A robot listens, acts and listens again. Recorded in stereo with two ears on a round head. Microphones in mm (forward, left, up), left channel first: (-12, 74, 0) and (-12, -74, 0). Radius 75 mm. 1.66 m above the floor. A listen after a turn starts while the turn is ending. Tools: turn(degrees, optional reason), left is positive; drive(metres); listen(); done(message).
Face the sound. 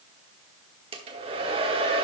turn(degrees=-35, reason="The hair dryer: about 35° right or 145° right.")
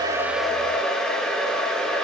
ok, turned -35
done("Found it: a hair dryer, straight ahead.")